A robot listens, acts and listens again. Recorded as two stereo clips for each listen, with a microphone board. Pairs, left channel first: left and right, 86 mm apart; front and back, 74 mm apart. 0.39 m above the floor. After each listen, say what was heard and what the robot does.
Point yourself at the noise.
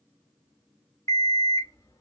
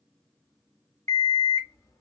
The alarm clock: 40° left. Turn 40° left.
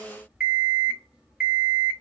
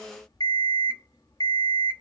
The alarm clock is now 10° right. Turn 10° right.
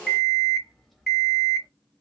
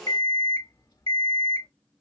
Found it: an alarm clock, straight ahead, under 1 m away.